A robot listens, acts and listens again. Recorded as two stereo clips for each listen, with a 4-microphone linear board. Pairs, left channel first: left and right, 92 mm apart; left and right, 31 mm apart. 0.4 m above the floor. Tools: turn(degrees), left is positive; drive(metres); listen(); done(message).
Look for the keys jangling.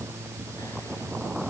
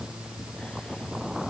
listen()
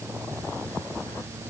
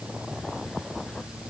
listen()
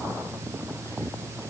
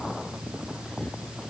done("I can't make out keys jangling.")